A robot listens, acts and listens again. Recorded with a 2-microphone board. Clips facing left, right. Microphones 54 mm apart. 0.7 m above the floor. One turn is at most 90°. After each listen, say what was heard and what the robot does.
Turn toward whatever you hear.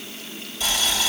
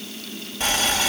The boiling: about 50° right or 130° right. Turn 50° right.
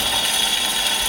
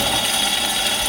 Facing the boiling, 2 to 4 m away.